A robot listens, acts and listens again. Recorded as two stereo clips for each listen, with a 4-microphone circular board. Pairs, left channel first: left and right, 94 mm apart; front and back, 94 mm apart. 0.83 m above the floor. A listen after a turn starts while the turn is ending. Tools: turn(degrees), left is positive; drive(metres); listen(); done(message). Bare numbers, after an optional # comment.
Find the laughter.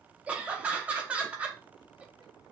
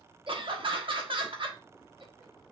# The laughter: 165° right.
turn(-165)
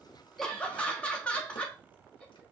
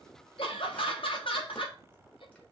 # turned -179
# The laughter is now 15° left.
turn(15)
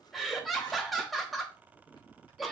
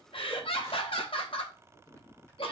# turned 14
done("Facing the laughter, 1 to 2 m away.")